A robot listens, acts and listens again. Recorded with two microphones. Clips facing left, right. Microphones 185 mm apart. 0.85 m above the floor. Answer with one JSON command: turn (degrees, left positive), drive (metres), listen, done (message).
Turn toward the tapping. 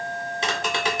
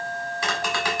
{"turn": 25}
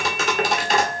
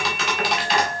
{"turn": 130}
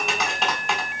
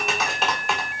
{"done": "Found it: tapping, straight ahead, 1 to 2 m away."}